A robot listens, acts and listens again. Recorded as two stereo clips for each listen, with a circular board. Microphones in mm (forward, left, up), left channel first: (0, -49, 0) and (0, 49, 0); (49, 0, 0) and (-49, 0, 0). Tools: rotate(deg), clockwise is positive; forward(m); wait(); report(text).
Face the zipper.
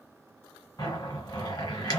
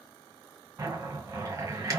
rotate(130)
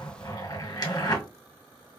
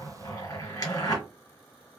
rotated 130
rotate(50)
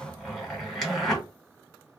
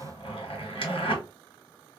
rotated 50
report("Found it: a zipper, straight ahead, 1 to 2 m away.")